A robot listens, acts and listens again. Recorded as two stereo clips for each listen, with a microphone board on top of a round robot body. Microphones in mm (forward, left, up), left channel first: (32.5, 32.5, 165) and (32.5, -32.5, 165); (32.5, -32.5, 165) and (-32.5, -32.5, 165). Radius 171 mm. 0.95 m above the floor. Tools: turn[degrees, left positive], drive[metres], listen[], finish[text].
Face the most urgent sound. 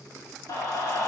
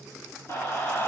Thought: The scream: 60° left.
Action: turn[60]
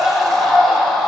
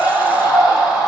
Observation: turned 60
Action: finish[Facing the scream, over 4 m away.]